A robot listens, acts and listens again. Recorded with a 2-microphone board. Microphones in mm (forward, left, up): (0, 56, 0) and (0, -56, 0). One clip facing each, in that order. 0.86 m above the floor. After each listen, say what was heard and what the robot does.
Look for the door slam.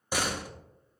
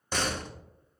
Turn 30° left.
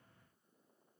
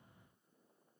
Keep listening.
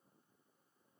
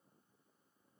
I heard a door slam, but can't make it out now. It was about 20° right or 140° left.